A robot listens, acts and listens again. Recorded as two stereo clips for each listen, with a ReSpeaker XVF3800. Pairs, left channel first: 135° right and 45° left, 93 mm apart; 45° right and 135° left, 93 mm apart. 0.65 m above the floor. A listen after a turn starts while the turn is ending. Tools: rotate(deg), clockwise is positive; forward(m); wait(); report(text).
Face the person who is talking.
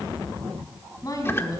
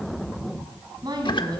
rotate(-175)
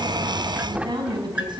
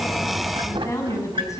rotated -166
rotate(-10)
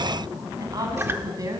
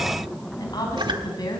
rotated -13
report("Facing the woman speaking.")